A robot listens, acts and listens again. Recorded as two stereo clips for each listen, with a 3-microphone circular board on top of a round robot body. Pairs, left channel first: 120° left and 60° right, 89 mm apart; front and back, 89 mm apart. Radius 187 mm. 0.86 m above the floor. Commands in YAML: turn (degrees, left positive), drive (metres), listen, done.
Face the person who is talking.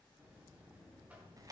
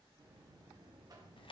listen: true
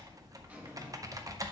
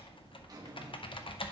listen: true
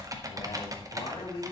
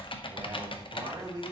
turn: 135
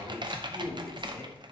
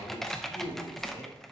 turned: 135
turn: 60
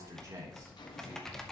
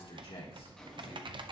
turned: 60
turn: -10
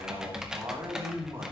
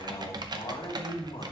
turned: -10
done: "Facing the man speaking."